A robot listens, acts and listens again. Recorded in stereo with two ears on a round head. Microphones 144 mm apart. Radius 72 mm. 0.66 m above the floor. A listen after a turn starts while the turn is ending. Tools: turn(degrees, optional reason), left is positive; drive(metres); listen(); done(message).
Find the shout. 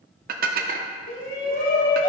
turn(degrees=60, reason="The shout: about 60° left or 120° left.")
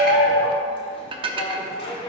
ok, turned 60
turn(degrees=40, reason="So it is at 40° left.")
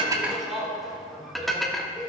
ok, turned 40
done("Found it: a shout, straight ahead, 1 to 2 m away.")